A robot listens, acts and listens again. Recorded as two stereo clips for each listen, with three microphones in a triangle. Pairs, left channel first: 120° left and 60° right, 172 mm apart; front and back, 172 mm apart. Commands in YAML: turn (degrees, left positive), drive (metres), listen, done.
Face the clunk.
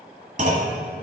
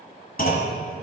turn: -25
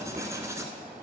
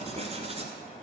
done: "I heard a clunk from this way, but can't make it out now."